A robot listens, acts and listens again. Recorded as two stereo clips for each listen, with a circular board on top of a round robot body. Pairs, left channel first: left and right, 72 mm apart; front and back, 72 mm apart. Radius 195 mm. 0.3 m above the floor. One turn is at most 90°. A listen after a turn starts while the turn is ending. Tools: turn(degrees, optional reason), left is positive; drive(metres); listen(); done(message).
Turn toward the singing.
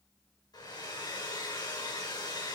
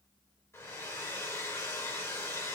listen()
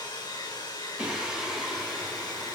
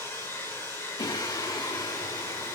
done("Found it: singing, straight ahead.")